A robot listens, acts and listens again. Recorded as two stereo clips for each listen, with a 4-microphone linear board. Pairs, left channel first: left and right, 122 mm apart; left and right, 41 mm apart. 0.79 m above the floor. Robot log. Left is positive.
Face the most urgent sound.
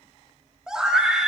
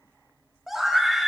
cmd yaw -30
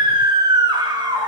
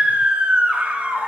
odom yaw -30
note: So it is at 140° right.
cmd yaw -140
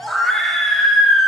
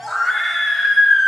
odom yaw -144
end: Facing the scream, 1 to 2 m away.